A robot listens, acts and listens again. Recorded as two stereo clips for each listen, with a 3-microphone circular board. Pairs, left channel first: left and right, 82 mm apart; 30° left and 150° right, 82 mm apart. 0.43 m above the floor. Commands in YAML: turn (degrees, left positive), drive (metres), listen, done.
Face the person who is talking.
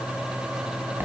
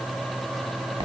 listen: true
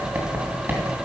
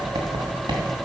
listen: true
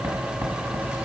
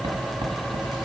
done: "I can't make out anyone speaking, only writing."